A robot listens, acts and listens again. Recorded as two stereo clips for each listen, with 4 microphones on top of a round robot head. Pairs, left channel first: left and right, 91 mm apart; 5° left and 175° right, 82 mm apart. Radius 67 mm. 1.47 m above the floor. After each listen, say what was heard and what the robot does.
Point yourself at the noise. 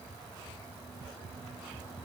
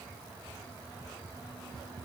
Keep listening.
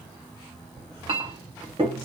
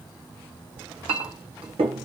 The clink: 140° right. Turn 140° right.
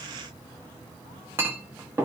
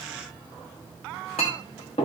The clink is now 30° right. Turn 30° right.
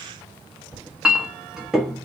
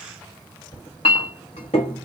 Facing the clink.